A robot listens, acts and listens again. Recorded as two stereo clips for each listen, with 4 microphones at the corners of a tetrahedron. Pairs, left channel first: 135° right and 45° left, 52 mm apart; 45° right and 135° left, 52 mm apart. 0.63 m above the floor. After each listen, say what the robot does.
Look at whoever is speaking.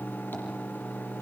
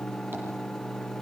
Keep listening.
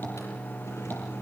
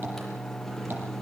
Keep listening.
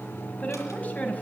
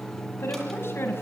Turn 80° right.
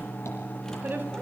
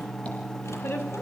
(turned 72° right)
Found it: a woman speaking, straight ahead, over 4 m away.